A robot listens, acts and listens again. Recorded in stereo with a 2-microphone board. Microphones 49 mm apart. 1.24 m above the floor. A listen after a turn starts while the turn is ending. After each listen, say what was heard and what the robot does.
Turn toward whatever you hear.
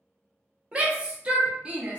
The shout: about 25° right or 155° right. Turn 25° right.
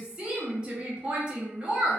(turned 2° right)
The shout: about 20° right or 160° right. Turn 20° right.
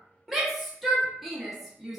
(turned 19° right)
Found it: a shout, straight ahead.